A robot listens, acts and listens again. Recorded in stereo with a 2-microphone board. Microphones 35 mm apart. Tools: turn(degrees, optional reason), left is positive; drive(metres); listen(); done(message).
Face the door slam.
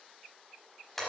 listen()
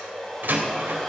turn(degrees=-65, reason="The door slam: about 65° right or 115° right.")
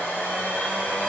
listen()
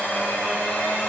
done("I heard a door slam, but can't make it out now. It was about straight ahead or 50° right.")